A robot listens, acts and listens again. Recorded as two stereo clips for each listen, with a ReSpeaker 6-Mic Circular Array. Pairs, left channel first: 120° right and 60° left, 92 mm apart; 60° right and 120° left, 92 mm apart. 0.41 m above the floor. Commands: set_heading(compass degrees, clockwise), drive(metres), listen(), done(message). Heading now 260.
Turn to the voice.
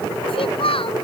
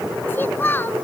set_heading(30)
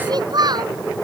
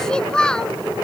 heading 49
set_heading(29)
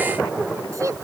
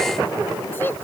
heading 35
done("Facing the child speaking.")